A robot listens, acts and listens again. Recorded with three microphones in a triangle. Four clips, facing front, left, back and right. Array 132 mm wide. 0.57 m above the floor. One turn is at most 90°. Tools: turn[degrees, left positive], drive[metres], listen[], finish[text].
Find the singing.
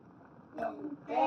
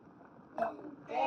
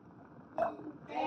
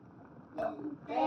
Thought: The singing: 25° right.
Action: turn[-25]
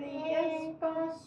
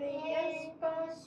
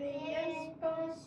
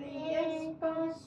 Thought: The singing is now 30° right.
Action: turn[-30]
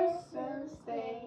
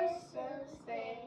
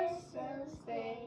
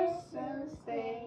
Thought: The singing is now 60° right.
Action: turn[-60]
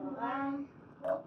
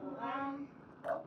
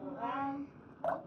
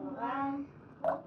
Thought: The singing is now 45° right.
Action: turn[-45]
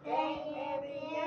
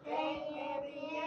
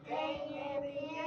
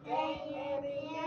Thought: The singing is now 10° right.
Action: turn[-10]
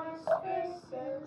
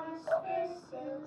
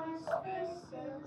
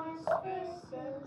Action: finish[Found it: singing, straight ahead.]